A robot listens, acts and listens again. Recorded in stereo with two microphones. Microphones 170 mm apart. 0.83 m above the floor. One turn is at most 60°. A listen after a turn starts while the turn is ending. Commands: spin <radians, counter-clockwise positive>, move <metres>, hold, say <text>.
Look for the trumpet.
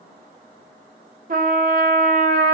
spin -0.96
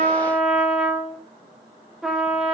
say Facing the trumpet.